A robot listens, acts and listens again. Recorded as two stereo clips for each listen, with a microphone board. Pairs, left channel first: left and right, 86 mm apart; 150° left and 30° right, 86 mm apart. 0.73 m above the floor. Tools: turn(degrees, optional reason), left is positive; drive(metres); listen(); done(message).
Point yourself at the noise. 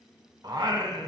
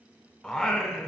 turn(degrees=-130, reason="The singing: 130° right.")
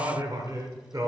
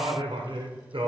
turn(degrees=-45, reason="The singing is now 45° right.")
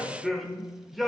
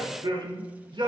done("Found it: singing, straight ahead, under 1 m away.")